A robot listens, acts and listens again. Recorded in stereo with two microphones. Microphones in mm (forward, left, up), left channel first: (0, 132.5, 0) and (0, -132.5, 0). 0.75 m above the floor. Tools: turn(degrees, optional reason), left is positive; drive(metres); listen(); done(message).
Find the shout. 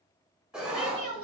turn(degrees=55, reason="The shout: about 55° left or 125° left.")
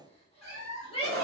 turn(degrees=25, reason="So it is at 25° left.")
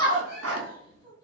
turn(degrees=20, reason="The shout is now 20° left.")
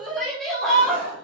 done("Facing the shout, 1 to 2 m away.")